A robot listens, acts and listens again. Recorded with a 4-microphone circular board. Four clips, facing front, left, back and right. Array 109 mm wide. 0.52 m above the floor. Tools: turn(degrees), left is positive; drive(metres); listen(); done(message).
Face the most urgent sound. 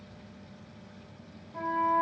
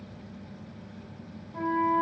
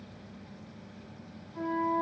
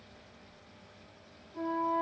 listen()
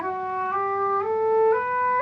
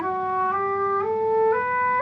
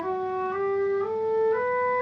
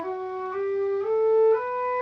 listen()
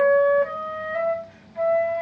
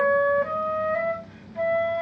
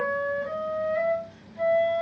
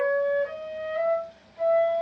done("I can't make out anything urgent to turn to.")